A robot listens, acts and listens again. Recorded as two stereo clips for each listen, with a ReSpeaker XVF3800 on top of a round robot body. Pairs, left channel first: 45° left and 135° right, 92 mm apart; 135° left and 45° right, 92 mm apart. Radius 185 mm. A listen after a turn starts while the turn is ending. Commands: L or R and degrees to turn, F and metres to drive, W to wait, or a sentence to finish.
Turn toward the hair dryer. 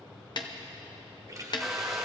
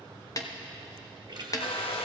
L135
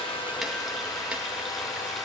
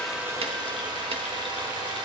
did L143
Facing the hair dryer.